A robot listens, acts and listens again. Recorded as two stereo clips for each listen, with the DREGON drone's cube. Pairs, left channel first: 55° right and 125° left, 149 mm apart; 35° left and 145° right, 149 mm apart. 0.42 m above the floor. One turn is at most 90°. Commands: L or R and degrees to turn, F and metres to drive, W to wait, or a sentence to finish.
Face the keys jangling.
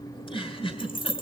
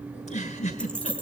R45
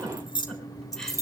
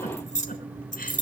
L15
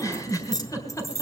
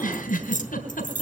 L15
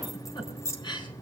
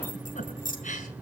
L15
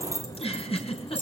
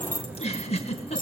L20
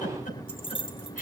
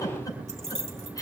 Facing the keys jangling.